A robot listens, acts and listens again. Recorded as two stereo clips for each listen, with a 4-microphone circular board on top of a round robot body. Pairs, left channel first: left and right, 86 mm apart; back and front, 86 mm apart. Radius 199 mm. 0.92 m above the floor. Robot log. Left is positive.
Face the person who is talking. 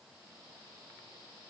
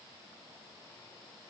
cmd idle
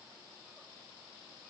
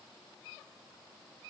cmd idle
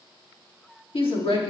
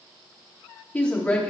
note: The woman speaking: 100° left.
cmd yaw +100
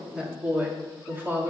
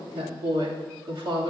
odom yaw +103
note: The woman speaking is now 25° right.
cmd yaw -25
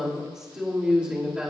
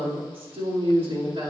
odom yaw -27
note: The woman speaking is now 10° right.
cmd yaw -10
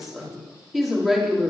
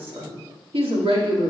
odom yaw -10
end: Found it: a woman speaking, straight ahead, 2 to 4 m away.